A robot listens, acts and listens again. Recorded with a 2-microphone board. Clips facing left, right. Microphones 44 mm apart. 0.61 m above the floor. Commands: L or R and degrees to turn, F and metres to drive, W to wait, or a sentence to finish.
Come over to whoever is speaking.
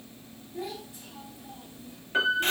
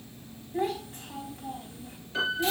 R55
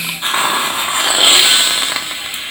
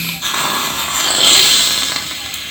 W
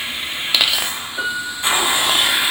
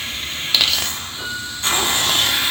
W
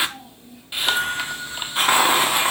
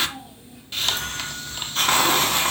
I heard a child speaking, but can't make it out now. It was about straight ahead or 70° right. I did not reach it.